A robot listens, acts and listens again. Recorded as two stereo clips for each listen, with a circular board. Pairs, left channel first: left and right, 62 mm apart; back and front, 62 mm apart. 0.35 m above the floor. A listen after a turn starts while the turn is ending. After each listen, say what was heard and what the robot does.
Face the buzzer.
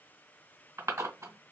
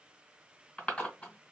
Keep listening.
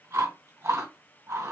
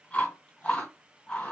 Keep listening.
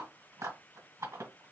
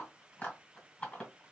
I can't make out a buzzer to turn to.